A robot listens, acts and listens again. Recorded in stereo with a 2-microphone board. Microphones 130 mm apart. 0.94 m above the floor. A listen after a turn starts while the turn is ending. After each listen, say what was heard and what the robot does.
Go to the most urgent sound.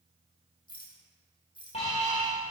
The alarm: about 50° left or 130° left. Turn 50° left.
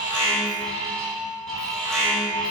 Drive 1.0 m forward.
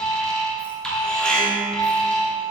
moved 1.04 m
Drive 1.0 m forward.
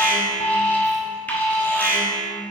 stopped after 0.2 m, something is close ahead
The alarm is now 10° left. Turn 10° left.
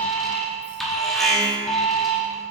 Arrived at the alarm, straight ahead.